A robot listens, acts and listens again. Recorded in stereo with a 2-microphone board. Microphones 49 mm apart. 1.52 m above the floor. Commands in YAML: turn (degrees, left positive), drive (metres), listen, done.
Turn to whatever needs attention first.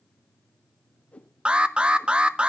turn: -20
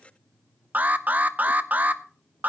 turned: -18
turn: -145
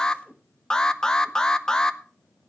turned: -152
turn: 15
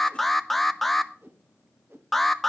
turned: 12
done: "Found it: an alarm, straight ahead, under 1 m away."